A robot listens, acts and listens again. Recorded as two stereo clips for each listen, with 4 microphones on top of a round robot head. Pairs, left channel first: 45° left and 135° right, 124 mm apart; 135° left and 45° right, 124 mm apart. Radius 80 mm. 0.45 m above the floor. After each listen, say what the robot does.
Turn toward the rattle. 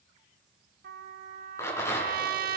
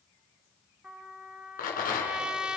Turn 115° left.
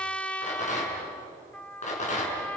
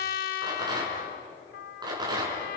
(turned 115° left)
Turn 15° left.
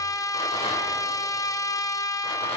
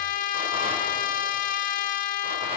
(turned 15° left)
Keep listening.
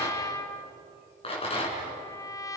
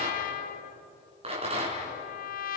Facing the rattle.